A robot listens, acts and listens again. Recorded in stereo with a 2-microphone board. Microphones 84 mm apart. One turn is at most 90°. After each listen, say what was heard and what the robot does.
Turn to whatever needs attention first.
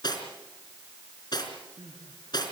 The crying: about 75° right or 105° right. Turn 75° right.
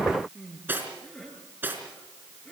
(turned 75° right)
Facing the crying.